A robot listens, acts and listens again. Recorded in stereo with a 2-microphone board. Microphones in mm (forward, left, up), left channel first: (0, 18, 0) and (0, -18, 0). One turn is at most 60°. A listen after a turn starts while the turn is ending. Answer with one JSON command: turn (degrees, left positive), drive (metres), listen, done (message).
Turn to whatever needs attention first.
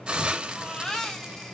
{"turn": 30}
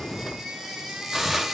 {"turn": -15}
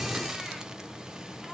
{"listen": true}
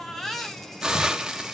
{"done": "Found it: a baby crying, straight ahead, 2 to 4 m away."}